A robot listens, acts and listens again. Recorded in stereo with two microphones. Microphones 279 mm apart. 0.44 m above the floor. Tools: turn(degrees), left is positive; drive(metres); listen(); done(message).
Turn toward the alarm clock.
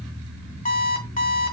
turn(degrees=30)
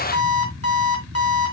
turn(degrees=120)
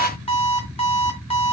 turn(degrees=20)
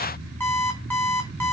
done("Facing the alarm clock.")